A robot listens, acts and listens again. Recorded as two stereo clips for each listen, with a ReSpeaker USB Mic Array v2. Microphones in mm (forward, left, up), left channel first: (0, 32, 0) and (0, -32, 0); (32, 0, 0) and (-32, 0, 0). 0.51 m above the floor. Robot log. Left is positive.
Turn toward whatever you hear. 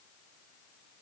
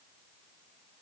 cmd idle
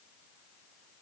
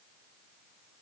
cmd idle
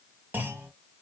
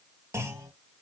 note: The clunk: 145° right.
cmd yaw -145
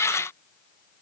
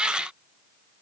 end: I heard a clunk from this way, but can't make it out now.